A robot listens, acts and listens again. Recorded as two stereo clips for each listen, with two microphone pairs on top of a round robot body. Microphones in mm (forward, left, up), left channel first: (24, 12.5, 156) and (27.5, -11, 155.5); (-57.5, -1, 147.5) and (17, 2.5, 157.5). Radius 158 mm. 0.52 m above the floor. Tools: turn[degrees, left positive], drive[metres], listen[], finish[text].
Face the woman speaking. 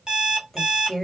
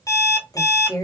Thought: The woman speaking: 170° left.
Action: turn[170]
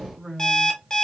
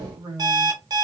Thought: The woman speaking is now 10° right.
Action: turn[-10]
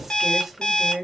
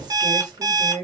Action: finish[Found it: a woman speaking, straight ahead.]